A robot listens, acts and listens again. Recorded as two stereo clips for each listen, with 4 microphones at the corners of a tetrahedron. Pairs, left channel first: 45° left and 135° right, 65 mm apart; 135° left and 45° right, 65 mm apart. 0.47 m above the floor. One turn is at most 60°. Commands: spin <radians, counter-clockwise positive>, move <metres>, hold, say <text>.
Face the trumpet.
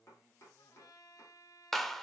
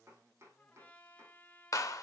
spin 1.05
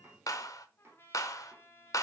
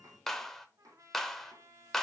spin -0.17
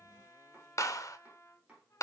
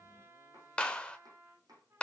say Found it: a trumpet, straight ahead.